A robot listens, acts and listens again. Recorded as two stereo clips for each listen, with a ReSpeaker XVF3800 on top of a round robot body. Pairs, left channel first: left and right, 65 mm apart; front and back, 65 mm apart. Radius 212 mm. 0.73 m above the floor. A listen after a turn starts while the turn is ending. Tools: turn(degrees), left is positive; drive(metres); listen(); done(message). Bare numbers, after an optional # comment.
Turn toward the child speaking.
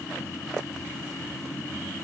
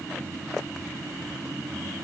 listen()
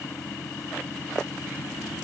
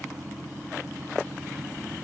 listen()
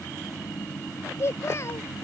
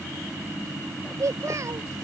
# The child speaking: 140° left.
turn(140)
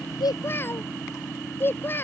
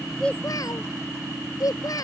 # The child speaking is now 30° left.
turn(30)
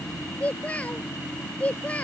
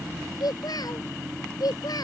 # The child speaking is now 20° left.
turn(20)
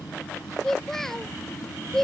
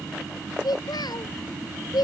done("Found it: a child speaking, straight ahead.")